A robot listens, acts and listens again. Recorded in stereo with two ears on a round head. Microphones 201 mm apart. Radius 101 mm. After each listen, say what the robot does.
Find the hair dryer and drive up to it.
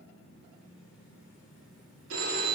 Keep listening.
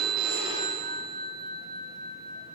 Keep listening.
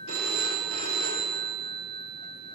I can't make out a hair dryer to turn to.